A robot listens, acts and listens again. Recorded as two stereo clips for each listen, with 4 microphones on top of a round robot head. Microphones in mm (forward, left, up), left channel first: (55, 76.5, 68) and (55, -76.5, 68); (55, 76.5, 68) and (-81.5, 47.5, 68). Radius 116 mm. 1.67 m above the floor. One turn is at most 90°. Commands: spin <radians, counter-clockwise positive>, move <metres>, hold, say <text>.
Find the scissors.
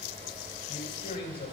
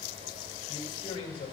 hold
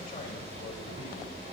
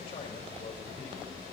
hold
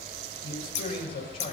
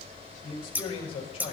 spin 1.57
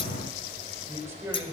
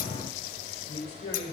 spin 0.44
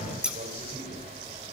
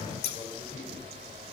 say Found it: scissors, straight ahead.